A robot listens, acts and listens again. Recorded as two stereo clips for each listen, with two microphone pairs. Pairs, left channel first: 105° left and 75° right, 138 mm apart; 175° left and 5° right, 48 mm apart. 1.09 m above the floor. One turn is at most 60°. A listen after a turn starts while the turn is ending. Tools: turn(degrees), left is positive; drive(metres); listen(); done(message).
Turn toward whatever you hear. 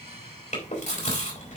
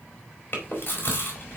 turn(degrees=60)
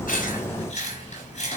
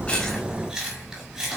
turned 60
turn(degrees=60)
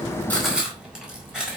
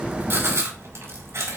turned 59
turn(degrees=10)
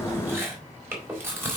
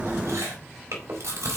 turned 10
done("Facing the chewing.")